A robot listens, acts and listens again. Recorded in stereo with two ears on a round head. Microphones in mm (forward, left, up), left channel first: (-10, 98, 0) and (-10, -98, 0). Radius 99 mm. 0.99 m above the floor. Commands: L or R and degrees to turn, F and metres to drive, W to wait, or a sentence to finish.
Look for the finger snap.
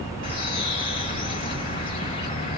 W
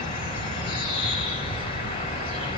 W
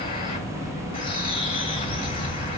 I can't make out a finger snap to turn to.